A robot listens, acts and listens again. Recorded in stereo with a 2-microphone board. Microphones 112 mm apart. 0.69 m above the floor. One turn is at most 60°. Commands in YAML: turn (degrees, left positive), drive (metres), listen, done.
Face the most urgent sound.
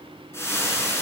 listen: true
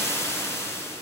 listen: true
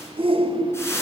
turn: -55
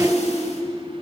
done: "Found it: a shout, straight ahead."